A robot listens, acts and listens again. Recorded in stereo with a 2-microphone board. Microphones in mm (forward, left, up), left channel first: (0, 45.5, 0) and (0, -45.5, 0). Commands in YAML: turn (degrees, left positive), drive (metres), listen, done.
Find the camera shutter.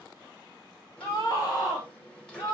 listen: true
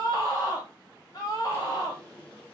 listen: true
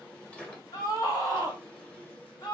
done: "I can't make out a camera shutter to turn to."